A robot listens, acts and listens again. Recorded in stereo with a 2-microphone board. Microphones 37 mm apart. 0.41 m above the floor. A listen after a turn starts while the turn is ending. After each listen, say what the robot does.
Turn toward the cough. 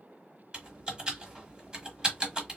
Keep listening.
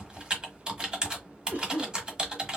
Turn 70° right.
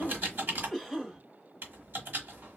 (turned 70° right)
Turn 20° right.
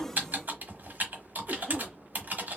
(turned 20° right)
Keep listening.
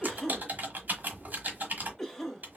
Facing the cough, 2 to 4 m away.